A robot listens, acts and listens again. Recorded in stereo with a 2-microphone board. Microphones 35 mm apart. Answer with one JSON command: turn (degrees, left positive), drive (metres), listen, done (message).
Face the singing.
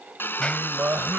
{"turn": -65}
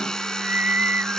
{"turn": -60}
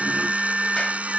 {"turn": -10}
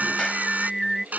{"done": "Found it: singing, straight ahead."}